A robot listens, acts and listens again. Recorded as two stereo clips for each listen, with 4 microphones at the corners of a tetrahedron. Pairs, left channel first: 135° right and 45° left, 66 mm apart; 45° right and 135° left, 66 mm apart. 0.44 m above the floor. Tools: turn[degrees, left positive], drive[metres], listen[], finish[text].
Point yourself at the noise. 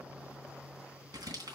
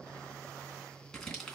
Thought: The crumpling: 40° left.
Action: turn[40]
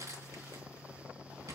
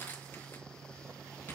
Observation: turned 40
Thought: The crumpling is now 15° left.
Action: turn[15]
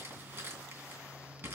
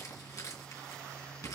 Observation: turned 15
Action: finish[Facing the crumpling.]